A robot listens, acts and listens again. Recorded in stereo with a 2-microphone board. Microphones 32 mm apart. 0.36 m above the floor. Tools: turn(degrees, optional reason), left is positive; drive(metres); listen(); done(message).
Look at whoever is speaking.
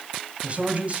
turn(degrees=-40, reason="The man speaking: about 40° right or 140° right.")
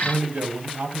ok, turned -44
turn(degrees=-90, reason="So it is at 90° right.")
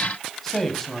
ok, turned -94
done("Facing the man speaking, 2 to 4 m away.")